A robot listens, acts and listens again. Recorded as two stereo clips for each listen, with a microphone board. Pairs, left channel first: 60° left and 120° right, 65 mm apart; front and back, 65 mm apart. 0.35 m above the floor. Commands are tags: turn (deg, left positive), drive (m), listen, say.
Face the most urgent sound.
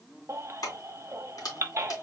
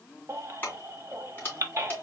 <turn deg="-155"/>
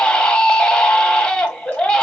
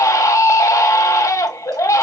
<turn deg="-15"/>
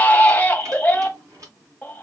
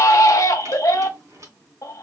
<say>Found it: a baby crying, straight ahead.</say>